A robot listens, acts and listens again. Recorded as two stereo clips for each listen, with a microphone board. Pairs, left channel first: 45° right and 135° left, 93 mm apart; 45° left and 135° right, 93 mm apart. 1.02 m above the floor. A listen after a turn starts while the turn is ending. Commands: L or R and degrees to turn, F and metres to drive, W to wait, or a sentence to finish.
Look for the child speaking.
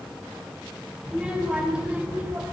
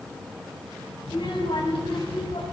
L60
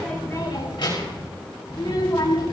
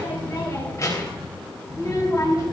Found it: a child speaking, straight ahead, over 4 m away.